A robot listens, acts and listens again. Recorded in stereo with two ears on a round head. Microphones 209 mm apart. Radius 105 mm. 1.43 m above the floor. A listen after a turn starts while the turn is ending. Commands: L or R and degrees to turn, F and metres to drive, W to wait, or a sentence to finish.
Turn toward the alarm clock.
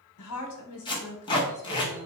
W
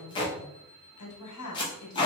R65
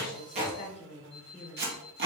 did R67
R45
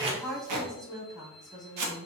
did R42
W
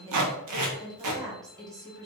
W
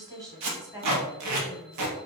I heard an alarm clock from this way, but can't make it out now.